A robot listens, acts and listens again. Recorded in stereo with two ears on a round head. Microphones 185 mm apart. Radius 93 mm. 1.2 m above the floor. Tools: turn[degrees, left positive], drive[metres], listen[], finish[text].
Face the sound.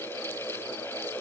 Action: listen[]
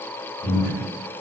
Thought: The breathing: about 25° right or 155° right.
Action: turn[-25]
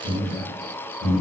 Action: finish[Found it: breathing, straight ahead, 1 to 2 m away.]